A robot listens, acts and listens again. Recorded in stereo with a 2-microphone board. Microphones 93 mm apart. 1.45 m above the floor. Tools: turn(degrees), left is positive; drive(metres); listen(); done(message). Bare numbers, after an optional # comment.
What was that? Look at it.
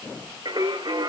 # The singing: about 50° right or 130° right.
turn(-50)
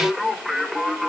done("Facing the singing.")